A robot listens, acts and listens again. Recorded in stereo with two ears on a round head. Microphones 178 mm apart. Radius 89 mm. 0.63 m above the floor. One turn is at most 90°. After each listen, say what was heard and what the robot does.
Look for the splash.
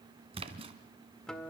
The splash: about 30° right or 150° right. Turn 30° right.
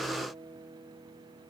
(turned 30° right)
Keep listening.
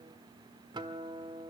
I heard a splash, but can't make it out now. It was about straight ahead or 120° right.